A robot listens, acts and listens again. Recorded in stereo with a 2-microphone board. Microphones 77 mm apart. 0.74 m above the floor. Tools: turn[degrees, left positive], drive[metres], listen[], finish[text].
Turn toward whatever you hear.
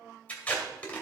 Thought: The tape being pulled: about 20° left or 160° left.
Action: turn[20]
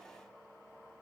Action: listen[]
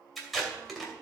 Action: finish[Facing the tape being pulled, 2 to 4 m away.]